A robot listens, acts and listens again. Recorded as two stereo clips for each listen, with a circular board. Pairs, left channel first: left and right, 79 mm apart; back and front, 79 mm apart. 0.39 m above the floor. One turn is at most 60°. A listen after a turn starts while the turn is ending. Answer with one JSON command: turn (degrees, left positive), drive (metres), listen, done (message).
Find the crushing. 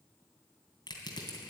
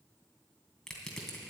{"turn": 60}
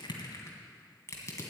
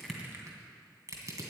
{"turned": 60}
{"turn": 40}
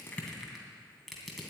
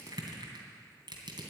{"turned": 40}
{"done": "Found it: crushing, straight ahead, 2 to 4 m away."}